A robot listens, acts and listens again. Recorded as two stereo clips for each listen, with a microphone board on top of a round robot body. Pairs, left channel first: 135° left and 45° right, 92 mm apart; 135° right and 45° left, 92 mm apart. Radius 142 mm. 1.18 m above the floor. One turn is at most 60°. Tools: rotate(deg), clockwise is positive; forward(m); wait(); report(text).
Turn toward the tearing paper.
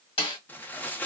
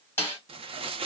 rotate(-60)
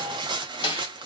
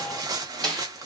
report("Facing the tearing paper, under 1 m away.")